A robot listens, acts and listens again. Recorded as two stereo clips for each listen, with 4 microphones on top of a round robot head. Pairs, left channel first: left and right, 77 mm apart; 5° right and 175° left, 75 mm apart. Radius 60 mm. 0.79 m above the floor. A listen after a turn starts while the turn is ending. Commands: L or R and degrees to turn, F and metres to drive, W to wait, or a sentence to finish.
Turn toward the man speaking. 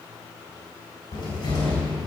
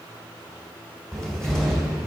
W
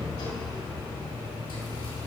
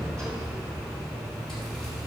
W
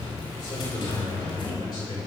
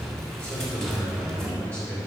L65
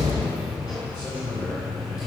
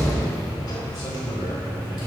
R20
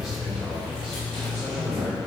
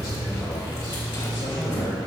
W
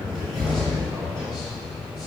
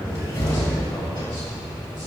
W
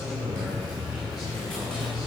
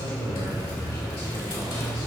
Facing where the man speaking came from. I can't hear it now.